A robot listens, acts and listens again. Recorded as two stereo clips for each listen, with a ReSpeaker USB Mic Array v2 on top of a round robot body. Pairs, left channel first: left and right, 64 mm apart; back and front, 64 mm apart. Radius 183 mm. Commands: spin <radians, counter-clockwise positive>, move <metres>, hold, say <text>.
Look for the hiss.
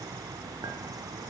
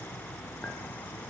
hold
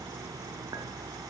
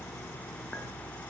hold
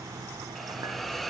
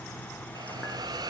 say Found it: a hiss, straight ahead.